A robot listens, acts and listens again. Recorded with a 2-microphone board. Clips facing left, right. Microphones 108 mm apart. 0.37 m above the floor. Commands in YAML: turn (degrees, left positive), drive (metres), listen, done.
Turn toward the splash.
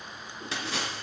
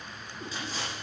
turn: 90
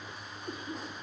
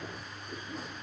done: "Facing where the splash came from. I can't hear it now."